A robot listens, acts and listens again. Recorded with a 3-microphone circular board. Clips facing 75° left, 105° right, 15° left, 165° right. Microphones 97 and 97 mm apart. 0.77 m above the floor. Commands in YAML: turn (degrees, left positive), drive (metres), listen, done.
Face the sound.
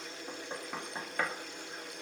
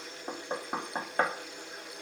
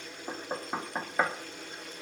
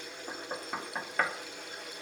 turn: -55
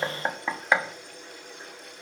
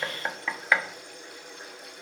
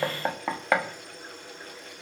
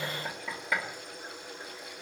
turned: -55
turn: 10
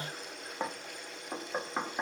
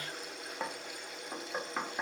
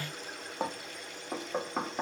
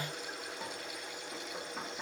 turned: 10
done: "Facing the knocking, under 1 m away."